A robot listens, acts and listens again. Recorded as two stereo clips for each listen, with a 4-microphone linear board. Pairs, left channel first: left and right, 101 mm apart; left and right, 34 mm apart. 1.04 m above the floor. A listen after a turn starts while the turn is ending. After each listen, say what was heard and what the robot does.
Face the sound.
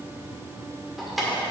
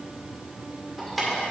Turn 30° left.
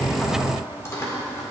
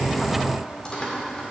So it is at 150° left. Turn 150° left.
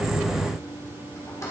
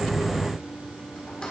The keys jangling is now 30° left. Turn 30° left.
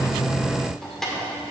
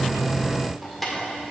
Facing the keys jangling.